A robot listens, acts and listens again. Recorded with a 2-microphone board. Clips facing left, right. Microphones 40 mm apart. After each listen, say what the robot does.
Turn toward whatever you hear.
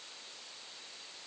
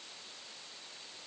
Keep listening.
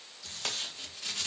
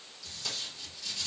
Turn 50° left.
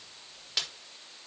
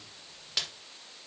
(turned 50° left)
Facing the tape being pulled.